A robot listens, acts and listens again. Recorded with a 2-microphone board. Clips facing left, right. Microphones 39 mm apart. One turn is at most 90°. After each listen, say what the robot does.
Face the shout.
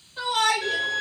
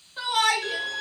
Turn 30° right.
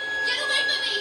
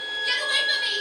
Keep listening.
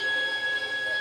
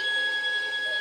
Keep listening.
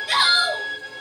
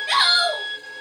Turn 90° right.
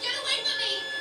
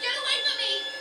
Turn 35° right.
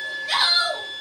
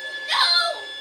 Facing the shout.